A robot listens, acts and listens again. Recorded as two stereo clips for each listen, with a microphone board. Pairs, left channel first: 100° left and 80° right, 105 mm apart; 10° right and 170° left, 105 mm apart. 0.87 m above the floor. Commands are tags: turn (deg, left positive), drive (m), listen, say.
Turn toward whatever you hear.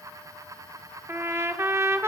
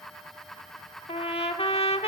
<turn deg="-15"/>
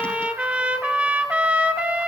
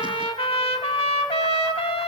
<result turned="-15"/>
<say>Facing the trumpet, 1 to 2 m away.</say>